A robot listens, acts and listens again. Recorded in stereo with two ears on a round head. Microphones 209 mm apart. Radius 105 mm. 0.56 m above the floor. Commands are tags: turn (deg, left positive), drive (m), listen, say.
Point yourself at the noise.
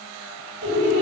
<turn deg="-65"/>
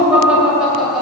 <say>Found it: laughter, straight ahead.</say>